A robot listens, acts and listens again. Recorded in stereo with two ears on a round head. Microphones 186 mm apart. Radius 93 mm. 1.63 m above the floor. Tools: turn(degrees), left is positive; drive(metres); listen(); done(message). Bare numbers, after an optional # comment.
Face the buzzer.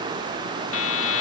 # The buzzer: about 70° left or 110° left.
turn(70)
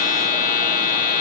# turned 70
# So it is at 40° left.
turn(40)
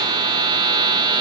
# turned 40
# The buzzer is now 20° right.
turn(-20)
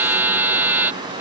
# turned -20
# The buzzer is now 10° right.
turn(-10)
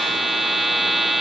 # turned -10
done("Found it: a buzzer, straight ahead.")